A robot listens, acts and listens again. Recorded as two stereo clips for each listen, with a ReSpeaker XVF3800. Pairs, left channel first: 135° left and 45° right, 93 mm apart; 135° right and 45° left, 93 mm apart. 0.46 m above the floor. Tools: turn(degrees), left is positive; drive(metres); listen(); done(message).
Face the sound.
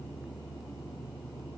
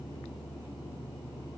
listen()
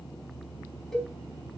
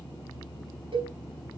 turn(degrees=50)
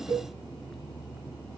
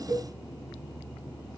done("Found it: a cowbell, straight ahead.")